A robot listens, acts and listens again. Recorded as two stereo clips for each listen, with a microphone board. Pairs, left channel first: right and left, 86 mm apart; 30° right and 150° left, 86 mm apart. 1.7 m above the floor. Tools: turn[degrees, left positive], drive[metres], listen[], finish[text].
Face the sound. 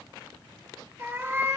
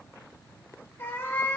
Thought: The cat meowing: 35° left.
Action: turn[35]
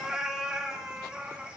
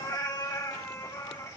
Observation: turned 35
Thought: The cat meowing is now 15° left.
Action: turn[15]
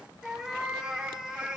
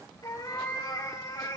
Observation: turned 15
Thought: The cat meowing is now 10° left.
Action: turn[10]
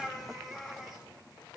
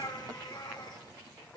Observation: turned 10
Action: finish[Found it: a cat meowing, straight ahead, 2 to 4 m away.]